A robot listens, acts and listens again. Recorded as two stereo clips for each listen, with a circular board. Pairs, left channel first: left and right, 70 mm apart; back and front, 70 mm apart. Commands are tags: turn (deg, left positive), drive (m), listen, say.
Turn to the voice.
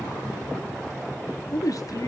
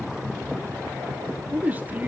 <turn deg="65"/>
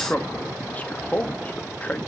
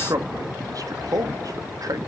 <turn deg="20"/>
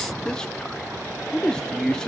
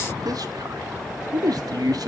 <turn deg="10"/>
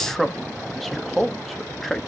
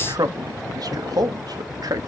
<say>Found it: a man speaking, straight ahead.</say>